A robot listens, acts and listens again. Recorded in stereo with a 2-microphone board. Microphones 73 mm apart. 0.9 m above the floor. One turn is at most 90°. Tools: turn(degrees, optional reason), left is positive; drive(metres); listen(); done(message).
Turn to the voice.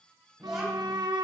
turn(degrees=-30)
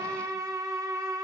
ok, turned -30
listen()
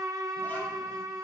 listen()
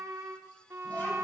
done("I heard a child speaking, but can't make it out now. It was about 25° left or 145° right.")